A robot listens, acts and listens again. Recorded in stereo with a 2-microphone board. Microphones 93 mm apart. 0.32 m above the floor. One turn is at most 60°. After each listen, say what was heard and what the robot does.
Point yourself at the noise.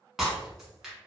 Turn 30° right.
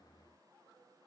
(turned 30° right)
Keep listening.
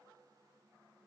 I heard breaking glass, but can't make it out now. It was about 25° left or 145° right.